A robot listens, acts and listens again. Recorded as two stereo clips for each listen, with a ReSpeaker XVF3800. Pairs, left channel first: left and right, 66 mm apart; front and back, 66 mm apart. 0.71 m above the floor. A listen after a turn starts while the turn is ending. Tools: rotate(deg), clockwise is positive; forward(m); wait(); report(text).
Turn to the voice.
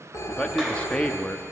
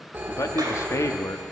rotate(-20)
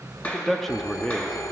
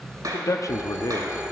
report("Found it: a man speaking, straight ahead.")